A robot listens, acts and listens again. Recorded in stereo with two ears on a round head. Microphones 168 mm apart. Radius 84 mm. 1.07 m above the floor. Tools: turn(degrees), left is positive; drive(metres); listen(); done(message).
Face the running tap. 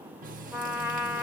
turn(degrees=-45)
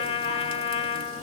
listen()
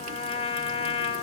listen()
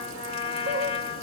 turn(degrees=-90)
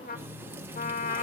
turn(degrees=-10)
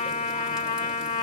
listen()
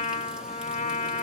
listen()
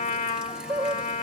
done("Found it: a running tap, straight ahead.")